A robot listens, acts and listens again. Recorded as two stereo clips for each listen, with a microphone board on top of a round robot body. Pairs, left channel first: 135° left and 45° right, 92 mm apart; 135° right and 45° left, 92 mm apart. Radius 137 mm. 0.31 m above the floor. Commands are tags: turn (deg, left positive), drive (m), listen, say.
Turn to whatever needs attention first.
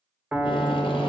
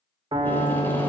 <listen/>
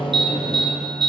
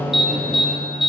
<turn deg="-40"/>
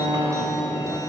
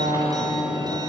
<listen/>
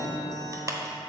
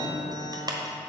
<say>Facing the alarm.</say>